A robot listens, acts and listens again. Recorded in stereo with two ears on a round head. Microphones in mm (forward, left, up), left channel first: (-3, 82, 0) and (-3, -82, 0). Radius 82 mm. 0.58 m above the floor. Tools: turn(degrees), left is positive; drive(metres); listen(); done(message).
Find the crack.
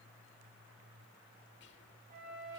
listen()
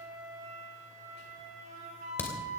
turn(degrees=30)
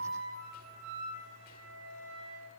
listen()
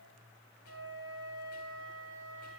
done("I heard a crack, but can't make it out now. It was about 20° right or 140° left.")